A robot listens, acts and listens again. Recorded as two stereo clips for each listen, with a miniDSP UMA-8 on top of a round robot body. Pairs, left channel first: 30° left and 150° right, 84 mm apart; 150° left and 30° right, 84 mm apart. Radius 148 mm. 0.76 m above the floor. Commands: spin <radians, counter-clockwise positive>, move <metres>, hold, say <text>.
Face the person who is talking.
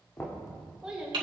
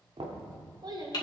spin -1.22
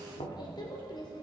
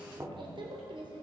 say Facing the child speaking, 2 to 4 m away.